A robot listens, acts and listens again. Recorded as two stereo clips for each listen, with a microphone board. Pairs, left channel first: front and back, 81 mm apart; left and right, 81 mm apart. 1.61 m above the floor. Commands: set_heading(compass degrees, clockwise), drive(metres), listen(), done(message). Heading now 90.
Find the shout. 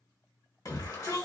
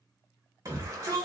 set_heading(135)
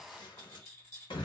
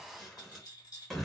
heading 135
done("Facing the shout, 1 to 2 m away.")